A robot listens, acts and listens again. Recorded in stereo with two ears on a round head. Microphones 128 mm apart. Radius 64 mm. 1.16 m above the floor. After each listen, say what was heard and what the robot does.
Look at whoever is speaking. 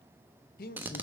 The man speaking: about 65° left or 115° left. Turn 65° left.
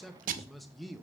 Facing the man speaking.